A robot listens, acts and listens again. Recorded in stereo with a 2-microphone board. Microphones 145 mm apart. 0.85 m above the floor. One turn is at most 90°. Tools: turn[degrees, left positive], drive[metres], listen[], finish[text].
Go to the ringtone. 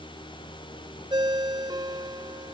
Thought: The ringtone: about 35° right or 145° right.
Action: turn[-35]
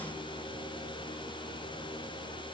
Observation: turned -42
Action: listen[]
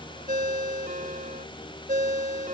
Thought: So it is at 105° right.
Action: turn[-90]
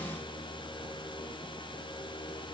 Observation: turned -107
Action: listen[]
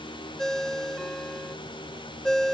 Action: drive[1.0]
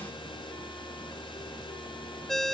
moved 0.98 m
Action: drive[1.0]
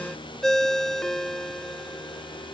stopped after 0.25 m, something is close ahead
Action: finish[I am next to the ringtone.]